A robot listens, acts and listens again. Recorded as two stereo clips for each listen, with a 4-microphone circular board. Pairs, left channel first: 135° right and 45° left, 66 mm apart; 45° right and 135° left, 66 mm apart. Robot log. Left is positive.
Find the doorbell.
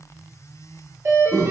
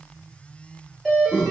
note: The doorbell: 40° left.
cmd yaw +40
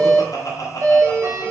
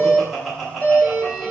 note: The doorbell is now 10° left.
cmd yaw +10
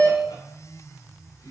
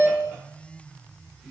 end: Found it: a doorbell, straight ahead.